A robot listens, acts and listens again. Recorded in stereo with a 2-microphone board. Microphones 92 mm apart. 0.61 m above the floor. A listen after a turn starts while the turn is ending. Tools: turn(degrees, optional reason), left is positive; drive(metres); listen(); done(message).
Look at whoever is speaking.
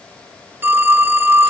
listen()
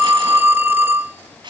listen()
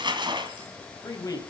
turn(degrees=40, reason="The man speaking: about 40° left or 140° left.")
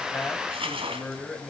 done("Found it: a man speaking, straight ahead.")